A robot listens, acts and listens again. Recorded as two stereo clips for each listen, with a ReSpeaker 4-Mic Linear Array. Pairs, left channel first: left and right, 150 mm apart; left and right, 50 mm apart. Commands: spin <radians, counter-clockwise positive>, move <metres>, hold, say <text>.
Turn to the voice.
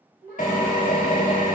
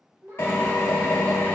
spin -1.31
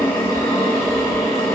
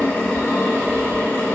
hold
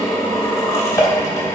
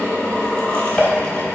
hold
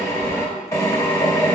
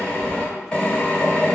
say I heard a child speaking, but can't make it out now. It was about straight ahead or 30° right.